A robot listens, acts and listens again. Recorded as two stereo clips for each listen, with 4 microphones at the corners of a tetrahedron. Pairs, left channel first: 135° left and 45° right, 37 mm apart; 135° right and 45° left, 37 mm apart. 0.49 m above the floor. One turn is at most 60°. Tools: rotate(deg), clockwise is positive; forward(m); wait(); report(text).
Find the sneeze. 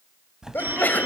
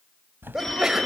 rotate(-60)
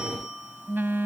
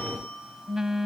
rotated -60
rotate(-60)
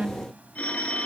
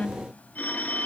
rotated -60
report("Facing where the sneeze came from. I can't hear it now.")